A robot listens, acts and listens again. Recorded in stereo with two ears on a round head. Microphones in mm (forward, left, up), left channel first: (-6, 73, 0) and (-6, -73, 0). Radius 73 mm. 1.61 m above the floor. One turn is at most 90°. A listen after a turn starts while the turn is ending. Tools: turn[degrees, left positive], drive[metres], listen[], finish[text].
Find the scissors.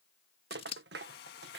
Thought: The scissors: about 35° left or 145° left.
Action: turn[35]
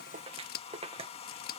Thought: So it is at 100° left.
Action: turn[90]
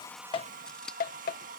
Action: finish[Facing the scissors.]